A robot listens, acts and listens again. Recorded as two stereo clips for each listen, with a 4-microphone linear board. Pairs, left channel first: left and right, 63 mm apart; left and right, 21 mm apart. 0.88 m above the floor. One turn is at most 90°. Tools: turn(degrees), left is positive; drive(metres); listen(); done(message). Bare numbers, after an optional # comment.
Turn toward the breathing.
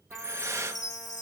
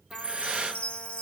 # The breathing: about 50° right or 130° right.
turn(-50)
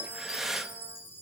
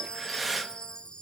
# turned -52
# So it is at 10° right.
turn(-10)
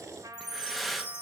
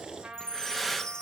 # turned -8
done("Found it: breathing, straight ahead, under 1 m away.")